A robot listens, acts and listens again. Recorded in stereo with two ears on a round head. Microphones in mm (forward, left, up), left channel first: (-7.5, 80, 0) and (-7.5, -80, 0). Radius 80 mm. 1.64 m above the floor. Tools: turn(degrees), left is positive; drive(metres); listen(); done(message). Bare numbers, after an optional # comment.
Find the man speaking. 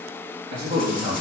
# The man speaking: about 25° right or 155° right.
turn(-25)
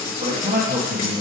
# The man speaking: about 35° right or 145° right.
turn(-35)
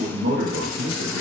# So it is at 120° right.
turn(-120)
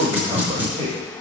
# The man speaking is now 30° right.
turn(-30)
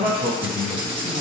# The man speaking is now 15° right.
turn(-15)
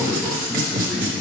done("Found it: a man speaking, straight ahead, 2 to 4 m away.")